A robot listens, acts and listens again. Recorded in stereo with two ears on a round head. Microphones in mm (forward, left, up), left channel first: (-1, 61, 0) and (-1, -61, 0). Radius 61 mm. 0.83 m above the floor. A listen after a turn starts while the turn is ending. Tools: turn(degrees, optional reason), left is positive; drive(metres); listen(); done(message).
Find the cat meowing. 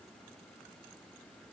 listen()
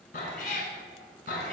turn(degrees=70, reason="The cat meowing: about 70° left or 110° left.")
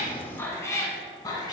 turn(degrees=30, reason="So it is at 30° left.")
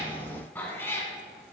turn(degrees=20, reason="The cat meowing is now 20° left.")
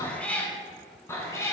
turn(degrees=20, reason="The cat meowing is now 20° left.")
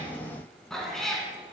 done("Found it: a cat meowing, straight ahead.")